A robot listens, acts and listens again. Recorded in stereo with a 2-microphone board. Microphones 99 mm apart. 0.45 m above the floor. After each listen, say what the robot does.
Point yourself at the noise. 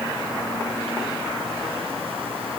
Keep listening.
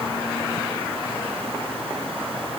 Keep listening.
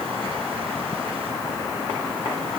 I can't make out anything to turn to.